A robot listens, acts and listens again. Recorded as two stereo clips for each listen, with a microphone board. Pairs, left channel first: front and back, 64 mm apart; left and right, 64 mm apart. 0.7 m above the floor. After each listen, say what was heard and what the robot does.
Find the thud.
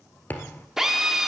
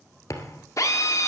The thud: 60° left. Turn 60° left.
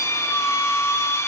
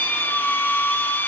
Facing where the thud came from. I can't hear it now.